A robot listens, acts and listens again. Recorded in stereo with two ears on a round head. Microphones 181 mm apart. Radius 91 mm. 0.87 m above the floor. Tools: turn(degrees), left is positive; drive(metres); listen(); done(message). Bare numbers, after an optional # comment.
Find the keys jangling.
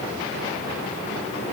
listen()
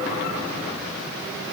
listen()
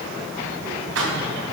# The keys jangling: about 70° right or 110° right.
turn(-70)
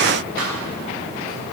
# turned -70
# So it is at 45° right.
turn(-45)
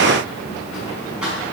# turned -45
done("Found it: keys jangling, straight ahead, over 4 m away.")